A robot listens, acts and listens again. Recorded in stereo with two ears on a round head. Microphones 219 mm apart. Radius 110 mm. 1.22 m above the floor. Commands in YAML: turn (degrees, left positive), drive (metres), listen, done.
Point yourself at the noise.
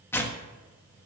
turn: 30
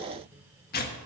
turn: 140
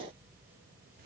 listen: true
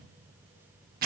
turn: -40
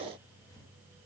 listen: true
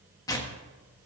turn: 15
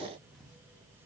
listen: true
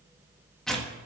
done: "Found it: tearing paper, straight ahead, 1 to 2 m away."